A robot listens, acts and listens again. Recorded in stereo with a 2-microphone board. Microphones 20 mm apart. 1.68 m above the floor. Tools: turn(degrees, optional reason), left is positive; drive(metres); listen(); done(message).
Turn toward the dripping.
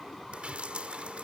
turn(degrees=-70, reason="The dripping: about 70° right or 110° right.")
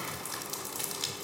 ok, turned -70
turn(degrees=-10, reason="So it is at 10° right.")
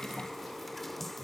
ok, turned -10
done("Facing the dripping.")